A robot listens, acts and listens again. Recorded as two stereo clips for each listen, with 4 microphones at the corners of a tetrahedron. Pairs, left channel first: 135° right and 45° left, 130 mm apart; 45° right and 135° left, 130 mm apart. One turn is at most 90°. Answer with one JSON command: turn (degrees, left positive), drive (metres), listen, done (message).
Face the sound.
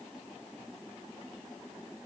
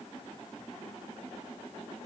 {"listen": true}
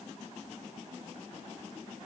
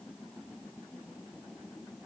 {"listen": true}
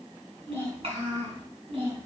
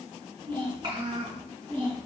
{"turn": 90}
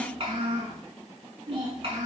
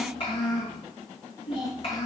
{"done": "Found it: a child speaking, straight ahead, over 4 m away."}